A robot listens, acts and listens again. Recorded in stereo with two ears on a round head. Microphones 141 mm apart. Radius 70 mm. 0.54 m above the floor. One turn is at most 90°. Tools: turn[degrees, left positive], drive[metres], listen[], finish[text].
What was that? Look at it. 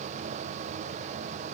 Action: listen[]
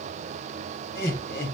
Thought: The laughter: about 70° left or 110° left.
Action: turn[70]
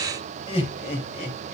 Thought: So it is at 45° left.
Action: turn[45]
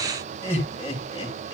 Thought: The laughter is now 25° left.
Action: turn[25]
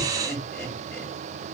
Action: finish[Found it: laughter, straight ahead, 2 to 4 m away.]